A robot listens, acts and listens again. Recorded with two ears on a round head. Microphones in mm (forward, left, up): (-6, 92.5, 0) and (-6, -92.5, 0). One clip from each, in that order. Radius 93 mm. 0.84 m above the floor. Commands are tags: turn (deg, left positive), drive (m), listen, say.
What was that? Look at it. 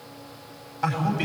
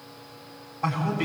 <turn deg="50"/>
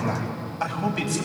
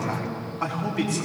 <turn deg="80"/>
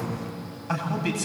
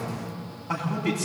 <turn deg="50"/>
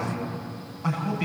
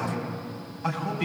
<say>Found it: a man speaking, straight ahead.</say>